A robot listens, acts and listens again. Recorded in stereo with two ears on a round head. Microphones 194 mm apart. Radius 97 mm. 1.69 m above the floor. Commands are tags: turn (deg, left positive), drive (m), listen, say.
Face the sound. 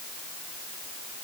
<listen/>
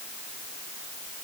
<listen/>
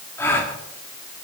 <turn deg="30"/>
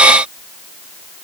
<listen/>
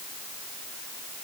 <say>I heard a gasp, but can't make it out now. It was about 20° right or 140° left.</say>